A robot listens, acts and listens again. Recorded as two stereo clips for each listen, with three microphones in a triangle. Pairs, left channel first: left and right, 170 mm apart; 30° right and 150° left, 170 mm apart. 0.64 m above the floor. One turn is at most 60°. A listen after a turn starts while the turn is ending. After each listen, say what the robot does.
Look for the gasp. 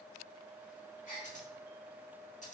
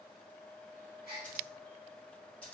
Turn 60° left.
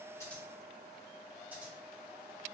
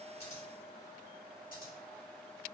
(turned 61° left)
Turn 60° left.
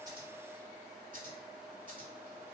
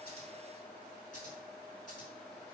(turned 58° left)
Turn 10° left.
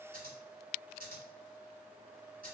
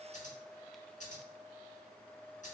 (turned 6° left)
I heard a gasp from this way, but can't make it out now.